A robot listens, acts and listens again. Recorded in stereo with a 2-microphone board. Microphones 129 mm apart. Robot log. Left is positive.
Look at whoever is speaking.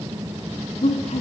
note: The woman speaking: about 65° left or 115° left.
cmd yaw +65
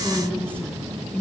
note: So it is at 10° left.
cmd yaw +10
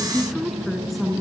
end: Found it: a woman speaking, straight ahead, 2 to 4 m away.